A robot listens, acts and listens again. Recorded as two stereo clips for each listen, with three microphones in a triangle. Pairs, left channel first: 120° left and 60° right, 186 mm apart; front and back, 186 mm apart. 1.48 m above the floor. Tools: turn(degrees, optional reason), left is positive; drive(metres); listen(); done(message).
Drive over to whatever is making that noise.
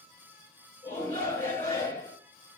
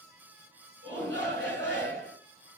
turn(degrees=-165, reason="The shout: 165° right.")
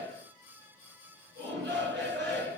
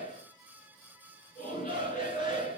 turn(degrees=-40, reason="The shout is now 40° right.")
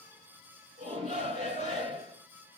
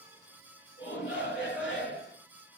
drive(metres=1.0)
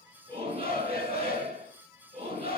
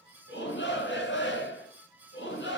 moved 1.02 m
drive(metres=1.0)
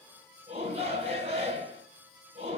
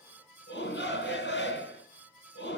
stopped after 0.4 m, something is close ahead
done("Arrived at the shout, straight ahead.")